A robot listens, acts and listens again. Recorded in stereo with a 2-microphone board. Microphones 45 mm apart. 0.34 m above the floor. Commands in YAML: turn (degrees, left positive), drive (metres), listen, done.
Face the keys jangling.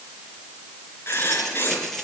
turn: 30
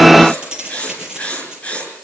turn: -15
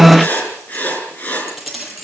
done: "Facing the keys jangling, over 4 m away."